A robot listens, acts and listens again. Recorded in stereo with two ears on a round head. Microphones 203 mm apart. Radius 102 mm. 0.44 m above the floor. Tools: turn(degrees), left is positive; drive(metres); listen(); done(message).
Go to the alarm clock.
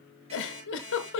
turn(degrees=-30)
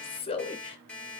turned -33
drive(metres=1.0)
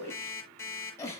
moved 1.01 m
turn(degrees=10)
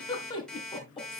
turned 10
drive(metres=1.0)
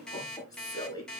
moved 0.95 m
drive(metres=1.0)
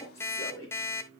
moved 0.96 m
turn(degrees=10)
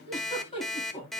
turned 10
drive(metres=1.0)
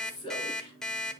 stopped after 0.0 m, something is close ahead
done("Arrived at the alarm clock, straight ahead.")